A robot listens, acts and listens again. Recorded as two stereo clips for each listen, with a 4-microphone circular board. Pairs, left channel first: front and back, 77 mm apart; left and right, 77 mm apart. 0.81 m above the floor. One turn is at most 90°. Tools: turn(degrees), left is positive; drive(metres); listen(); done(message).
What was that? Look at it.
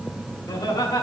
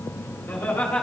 turn(degrees=20)
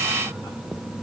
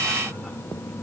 listen()
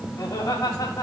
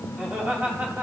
turn(degrees=-30)
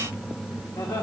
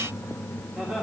turn(degrees=-25)
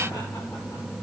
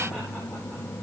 listen()
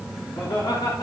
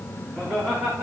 turn(degrees=-25)
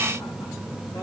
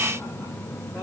listen()
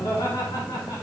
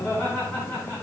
done("Facing the laughter, 2 to 4 m away.")